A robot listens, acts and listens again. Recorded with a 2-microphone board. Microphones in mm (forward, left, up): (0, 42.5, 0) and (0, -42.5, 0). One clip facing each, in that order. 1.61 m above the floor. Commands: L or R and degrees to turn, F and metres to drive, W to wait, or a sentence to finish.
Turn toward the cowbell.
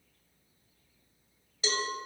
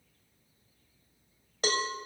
R60
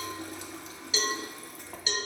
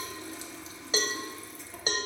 R45
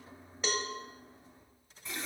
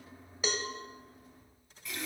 Found it: a cowbell, straight ahead.